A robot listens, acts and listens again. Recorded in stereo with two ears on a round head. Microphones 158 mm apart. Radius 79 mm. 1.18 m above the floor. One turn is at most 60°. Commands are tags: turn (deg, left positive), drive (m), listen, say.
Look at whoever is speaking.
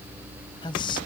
<turn deg="25"/>
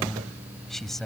<say>Facing the man speaking.</say>